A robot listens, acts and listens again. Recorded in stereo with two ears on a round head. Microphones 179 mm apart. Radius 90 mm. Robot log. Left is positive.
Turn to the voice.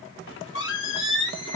cmd idle
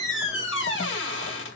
cmd idle
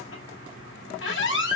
end: I can't make out anyone speaking to turn to.